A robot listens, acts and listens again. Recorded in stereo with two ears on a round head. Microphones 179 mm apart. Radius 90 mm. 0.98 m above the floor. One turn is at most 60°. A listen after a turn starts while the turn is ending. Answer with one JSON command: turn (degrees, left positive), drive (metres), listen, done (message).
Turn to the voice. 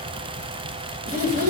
{"turn": -45}
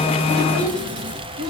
{"turn": -60}
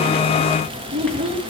{"turn": -25}
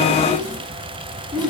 {"done": "Facing the child speaking, over 4 m away."}